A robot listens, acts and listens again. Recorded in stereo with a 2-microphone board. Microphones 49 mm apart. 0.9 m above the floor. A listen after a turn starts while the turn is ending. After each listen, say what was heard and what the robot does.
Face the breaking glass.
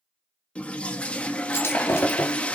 The breaking glass: about 55° left or 125° left. Turn 55° left.
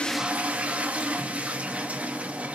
Keep listening.
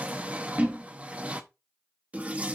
I heard breaking glass, but can't make it out now. It was about straight ahead or 70° left.